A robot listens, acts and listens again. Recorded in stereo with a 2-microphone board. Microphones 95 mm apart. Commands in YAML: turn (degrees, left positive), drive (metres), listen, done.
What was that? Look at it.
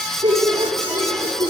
turn: -65
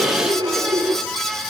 turn: -55
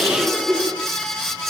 turn: -10
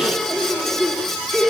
done: "Facing the laughter."